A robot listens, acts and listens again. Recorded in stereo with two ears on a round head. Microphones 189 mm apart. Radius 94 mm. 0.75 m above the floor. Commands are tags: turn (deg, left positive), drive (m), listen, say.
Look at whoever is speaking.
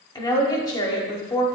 <turn deg="20"/>
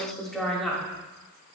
<say>Found it: a woman speaking, straight ahead.</say>